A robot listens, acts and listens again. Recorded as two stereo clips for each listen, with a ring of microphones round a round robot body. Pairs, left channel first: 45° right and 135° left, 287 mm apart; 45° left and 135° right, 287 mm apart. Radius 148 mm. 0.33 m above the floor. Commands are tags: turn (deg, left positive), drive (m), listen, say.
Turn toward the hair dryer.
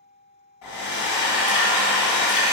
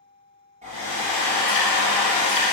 <turn deg="-70"/>
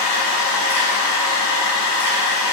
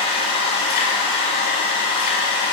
<turn deg="-25"/>
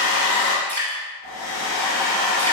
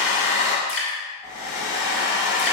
<say>Facing the hair dryer.</say>